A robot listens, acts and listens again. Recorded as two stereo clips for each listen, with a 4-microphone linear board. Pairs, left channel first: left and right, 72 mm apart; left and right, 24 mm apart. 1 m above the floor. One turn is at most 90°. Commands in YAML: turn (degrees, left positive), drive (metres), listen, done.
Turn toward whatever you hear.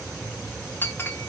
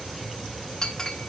turn: 25
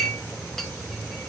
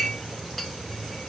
listen: true
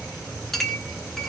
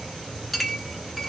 done: "Found it: a clink, straight ahead."